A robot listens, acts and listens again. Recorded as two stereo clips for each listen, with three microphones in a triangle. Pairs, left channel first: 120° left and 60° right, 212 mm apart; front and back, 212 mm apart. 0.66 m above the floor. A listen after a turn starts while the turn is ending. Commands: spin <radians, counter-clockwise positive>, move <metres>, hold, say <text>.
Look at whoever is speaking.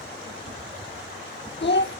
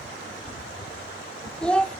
spin 1.48
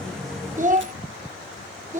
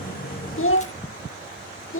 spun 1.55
say Facing the child speaking, 1 to 2 m away.